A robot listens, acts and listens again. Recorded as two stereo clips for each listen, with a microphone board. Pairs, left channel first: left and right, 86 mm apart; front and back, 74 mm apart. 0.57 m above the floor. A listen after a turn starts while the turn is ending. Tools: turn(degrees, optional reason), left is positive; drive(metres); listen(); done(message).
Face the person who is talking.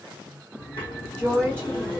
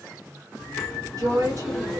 turn(degrees=165, reason="The woman speaking: 165° left.")
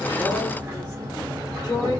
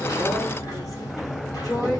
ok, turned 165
turn(degrees=40, reason="The woman speaking is now 40° left.")
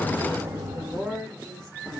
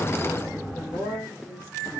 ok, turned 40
turn(degrees=10, reason="The woman speaking is now 10° left.")
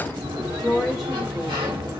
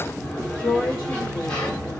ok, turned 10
done("Facing the woman speaking, 1 to 2 m away.")